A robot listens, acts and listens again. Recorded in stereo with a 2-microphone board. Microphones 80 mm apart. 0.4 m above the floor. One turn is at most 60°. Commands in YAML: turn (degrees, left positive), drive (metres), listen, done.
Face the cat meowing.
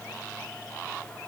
listen: true
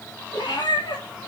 turn: 60
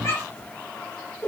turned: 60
turn: 30
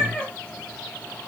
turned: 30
turn: 15
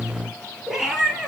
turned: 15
done: "Facing the cat meowing."